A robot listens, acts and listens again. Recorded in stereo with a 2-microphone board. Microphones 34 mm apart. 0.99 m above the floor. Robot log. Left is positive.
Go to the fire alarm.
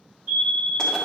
note: The fire alarm: about 60° right or 120° right.
cmd yaw -60
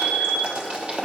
note: So it is at 40° right.
cmd yaw -40
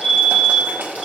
note: The fire alarm is now 10° left.
cmd yaw +10
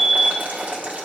cmd fwd 1.0
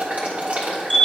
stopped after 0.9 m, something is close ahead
end: Arrived at the fire alarm, straight ahead.